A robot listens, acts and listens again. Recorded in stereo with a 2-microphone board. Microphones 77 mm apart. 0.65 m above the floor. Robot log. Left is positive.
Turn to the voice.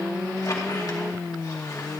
cmd idle
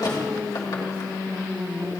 cmd idle
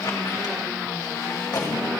end: I can't make out anyone speaking to turn to.